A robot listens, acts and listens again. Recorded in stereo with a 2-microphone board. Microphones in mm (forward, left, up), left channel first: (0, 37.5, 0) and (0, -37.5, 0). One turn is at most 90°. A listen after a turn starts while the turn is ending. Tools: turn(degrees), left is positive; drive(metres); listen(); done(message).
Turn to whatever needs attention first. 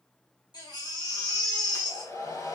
turn(degrees=90)
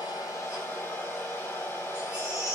turn(degrees=-15)
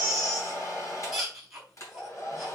done("Facing the baby crying.")